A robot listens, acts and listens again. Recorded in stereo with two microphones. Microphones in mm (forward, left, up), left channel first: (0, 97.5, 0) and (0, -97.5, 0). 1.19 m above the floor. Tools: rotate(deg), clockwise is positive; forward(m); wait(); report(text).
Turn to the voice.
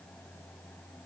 wait()
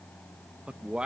rotate(30)
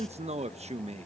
rotate(145)
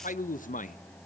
rotate(-45)
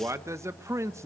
rotate(15)
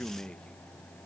report("Facing the man speaking, under 1 m away.")